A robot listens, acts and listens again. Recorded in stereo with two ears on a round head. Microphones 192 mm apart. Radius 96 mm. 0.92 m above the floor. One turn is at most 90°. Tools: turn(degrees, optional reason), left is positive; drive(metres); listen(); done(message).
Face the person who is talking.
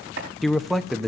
turn(degrees=30)
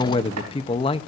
turn(degrees=90, reason="So it is at 150° left.")
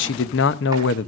turn(degrees=85, reason="The man speaking is now 85° left.")
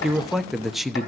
done("Found it: a man speaking, straight ahead, under 1 m away.")